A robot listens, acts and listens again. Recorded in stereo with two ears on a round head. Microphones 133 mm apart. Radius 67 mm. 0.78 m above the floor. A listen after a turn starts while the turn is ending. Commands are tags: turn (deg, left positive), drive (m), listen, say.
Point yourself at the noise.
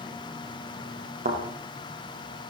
<turn deg="-50"/>
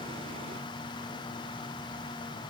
<listen/>
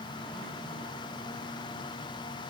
<say>I heard a thud, but can't make it out now. It was about straight ahead or 80° right.</say>